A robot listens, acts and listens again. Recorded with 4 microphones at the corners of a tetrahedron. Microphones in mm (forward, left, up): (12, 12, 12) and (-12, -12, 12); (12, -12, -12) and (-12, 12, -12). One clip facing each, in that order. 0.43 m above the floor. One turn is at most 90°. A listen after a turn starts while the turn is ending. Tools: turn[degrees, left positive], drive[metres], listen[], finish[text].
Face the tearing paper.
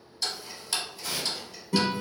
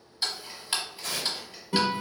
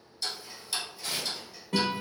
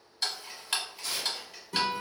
Thought: The tearing paper: 115° right.
Action: turn[-90]
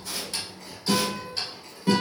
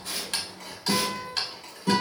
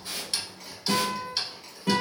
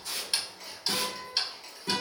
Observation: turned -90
Thought: Nothing new. It was at 25° right.
Action: turn[-25]
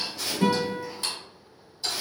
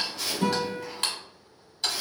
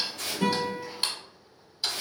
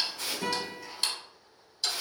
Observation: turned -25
Thought: The tearing paper is now 40° right.
Action: turn[-40]
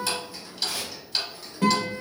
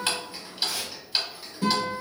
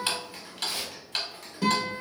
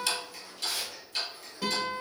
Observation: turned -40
Thought: The tearing paper is now 15° left.
Action: turn[15]
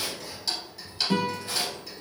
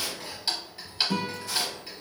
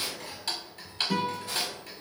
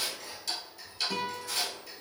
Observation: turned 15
Action: listen[]
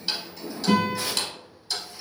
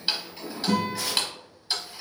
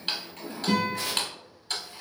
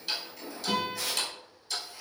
Action: finish[Facing the tearing paper.]